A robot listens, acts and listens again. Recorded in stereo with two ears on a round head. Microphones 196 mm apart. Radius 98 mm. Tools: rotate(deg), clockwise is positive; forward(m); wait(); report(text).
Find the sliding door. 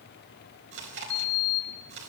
rotate(-55)
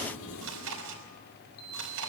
rotate(-70)
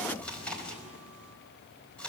report("Facing the sliding door, over 4 m away.")